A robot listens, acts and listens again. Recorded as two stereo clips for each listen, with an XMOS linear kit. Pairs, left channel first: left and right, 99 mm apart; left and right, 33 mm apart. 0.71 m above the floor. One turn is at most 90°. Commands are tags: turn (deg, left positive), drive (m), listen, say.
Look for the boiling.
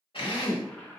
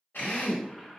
<turn deg="15"/>
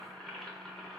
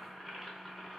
<say>Found it: boiling, straight ahead.</say>